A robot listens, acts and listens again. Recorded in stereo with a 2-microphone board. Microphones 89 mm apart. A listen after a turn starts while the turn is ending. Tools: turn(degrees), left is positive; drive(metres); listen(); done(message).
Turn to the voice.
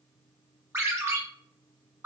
listen()
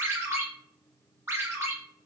listen()
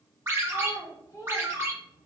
turn(degrees=35)
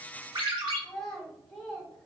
done("Facing the child speaking, 1 to 2 m away.")